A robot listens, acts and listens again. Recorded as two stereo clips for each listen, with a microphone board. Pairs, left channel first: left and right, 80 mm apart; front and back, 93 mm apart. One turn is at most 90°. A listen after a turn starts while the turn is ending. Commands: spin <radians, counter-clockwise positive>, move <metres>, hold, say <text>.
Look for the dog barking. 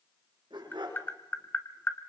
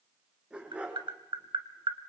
spin -1.57
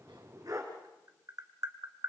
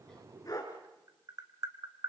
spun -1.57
spin -0.87
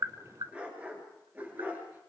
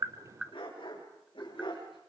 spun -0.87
spin -0.44
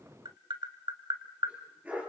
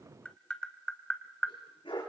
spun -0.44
spin -0.35
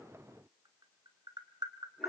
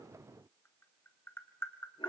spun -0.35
hold
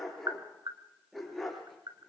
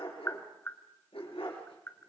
say Facing the dog barking, over 4 m away.